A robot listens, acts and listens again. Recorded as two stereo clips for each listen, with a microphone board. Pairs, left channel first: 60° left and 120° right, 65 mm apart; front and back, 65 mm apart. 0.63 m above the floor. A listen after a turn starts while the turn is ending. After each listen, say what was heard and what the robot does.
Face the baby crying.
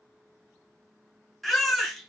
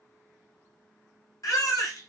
The baby crying: 25° right. Turn 25° right.
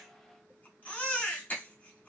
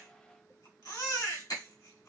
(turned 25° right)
Facing the baby crying, 1 to 2 m away.